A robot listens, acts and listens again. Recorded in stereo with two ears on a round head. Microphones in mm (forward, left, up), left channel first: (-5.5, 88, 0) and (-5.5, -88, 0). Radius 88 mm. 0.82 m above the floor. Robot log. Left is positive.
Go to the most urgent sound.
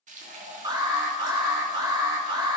note: The alarm: about 25° right or 155° right.
cmd yaw -25
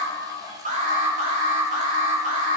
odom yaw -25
note: So it is at 130° right.
cmd yaw -130
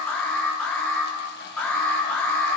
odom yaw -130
note: The alarm is now 10° left.
cmd yaw +10
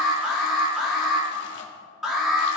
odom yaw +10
cmd fwd 1.0
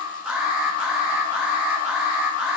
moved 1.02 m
cmd fwd 1.0
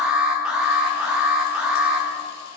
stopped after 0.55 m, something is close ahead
end: Arrived at the alarm, straight ahead.